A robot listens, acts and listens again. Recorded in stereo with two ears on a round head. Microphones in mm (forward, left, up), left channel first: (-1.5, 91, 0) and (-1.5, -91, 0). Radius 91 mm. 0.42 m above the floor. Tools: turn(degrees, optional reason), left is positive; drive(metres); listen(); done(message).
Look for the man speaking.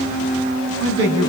turn(degrees=-65, reason="The man speaking: about 65° right or 115° right.")
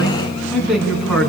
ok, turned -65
done("Facing the man speaking, over 4 m away.")